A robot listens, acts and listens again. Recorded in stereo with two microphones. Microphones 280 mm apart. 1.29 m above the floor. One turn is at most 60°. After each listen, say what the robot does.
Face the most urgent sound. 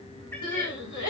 Turn 60° left.
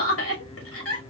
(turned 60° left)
Turn 50° left.
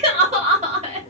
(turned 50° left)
Turn 20° right.
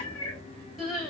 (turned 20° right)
Found it: crying, straight ahead.